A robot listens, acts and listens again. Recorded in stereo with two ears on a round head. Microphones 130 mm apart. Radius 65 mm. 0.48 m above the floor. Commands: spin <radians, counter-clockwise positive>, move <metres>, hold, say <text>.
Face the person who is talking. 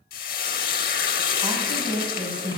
spin -0.52
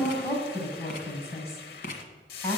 spin 0.35
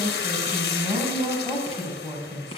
say Facing the woman speaking, 2 to 4 m away.